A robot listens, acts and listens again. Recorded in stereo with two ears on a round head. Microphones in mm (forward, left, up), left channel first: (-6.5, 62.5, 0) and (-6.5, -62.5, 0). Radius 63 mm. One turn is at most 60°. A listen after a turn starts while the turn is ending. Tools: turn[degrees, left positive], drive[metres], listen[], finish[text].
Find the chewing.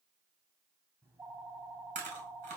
Thought: The chewing: about 55° right or 125° right.
Action: turn[-55]
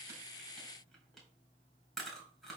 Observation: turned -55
Action: finish[Facing the chewing.]